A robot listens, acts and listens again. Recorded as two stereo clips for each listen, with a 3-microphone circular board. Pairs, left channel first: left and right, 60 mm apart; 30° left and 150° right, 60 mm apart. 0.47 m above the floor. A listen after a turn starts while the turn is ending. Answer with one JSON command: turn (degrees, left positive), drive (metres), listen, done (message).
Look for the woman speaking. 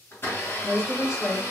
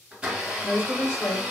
{"done": "Facing the woman speaking, 1 to 2 m away."}